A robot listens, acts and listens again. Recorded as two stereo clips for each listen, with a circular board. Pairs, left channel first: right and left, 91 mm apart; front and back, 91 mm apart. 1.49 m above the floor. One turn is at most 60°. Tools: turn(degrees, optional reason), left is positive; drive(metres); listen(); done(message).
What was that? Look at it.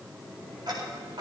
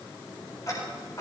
turn(degrees=50, reason="The ticking: 50° left.")
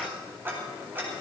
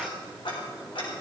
turn(degrees=20, reason="The ticking is now 20° left.")
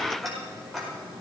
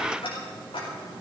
done("Found it: ticking, straight ahead, over 4 m away.")